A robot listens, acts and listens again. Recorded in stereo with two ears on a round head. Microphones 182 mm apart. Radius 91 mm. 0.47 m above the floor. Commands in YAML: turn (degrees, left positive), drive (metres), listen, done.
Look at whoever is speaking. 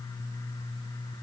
listen: true
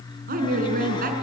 turn: -45
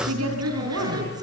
turn: -90
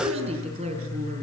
turn: -30
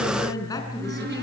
turn: 20
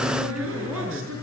done: "Facing the woman speaking."